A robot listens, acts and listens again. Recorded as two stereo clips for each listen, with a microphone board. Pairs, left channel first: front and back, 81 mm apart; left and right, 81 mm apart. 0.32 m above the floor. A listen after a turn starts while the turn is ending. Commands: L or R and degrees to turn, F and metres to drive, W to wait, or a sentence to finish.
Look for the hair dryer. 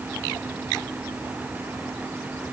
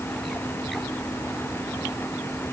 W
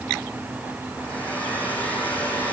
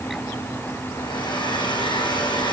L70
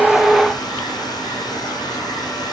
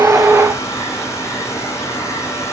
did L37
L35
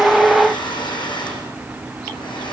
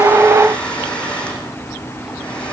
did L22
L10
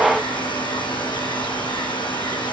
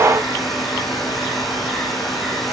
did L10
Facing the hair dryer, over 4 m away.